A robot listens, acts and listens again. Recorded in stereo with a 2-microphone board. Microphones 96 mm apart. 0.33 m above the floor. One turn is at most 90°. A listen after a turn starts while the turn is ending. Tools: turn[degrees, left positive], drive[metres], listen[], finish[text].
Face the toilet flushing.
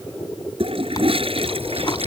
Action: turn[-90]
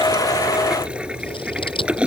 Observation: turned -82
Thought: So it is at 10° right.
Action: turn[-10]
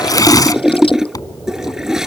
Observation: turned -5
Action: finish[Found it: a toilet flushing, straight ahead.]